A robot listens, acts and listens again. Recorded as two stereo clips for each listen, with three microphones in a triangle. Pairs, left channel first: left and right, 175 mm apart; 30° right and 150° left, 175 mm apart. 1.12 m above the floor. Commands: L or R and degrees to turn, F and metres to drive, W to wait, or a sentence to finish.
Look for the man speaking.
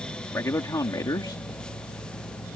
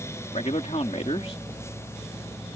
L20
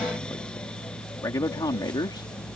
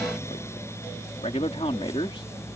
L25
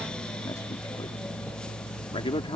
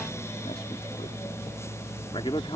L30
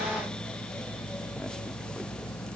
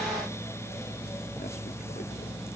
W
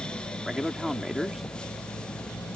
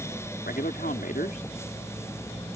Facing the man speaking.